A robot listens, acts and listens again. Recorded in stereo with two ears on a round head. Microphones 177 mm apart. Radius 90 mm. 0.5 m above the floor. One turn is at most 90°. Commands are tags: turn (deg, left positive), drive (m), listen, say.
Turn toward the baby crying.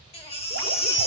<turn deg="30"/>
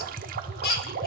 <turn deg="90"/>
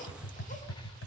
<turn deg="25"/>
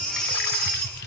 <say>Found it: a baby crying, straight ahead.</say>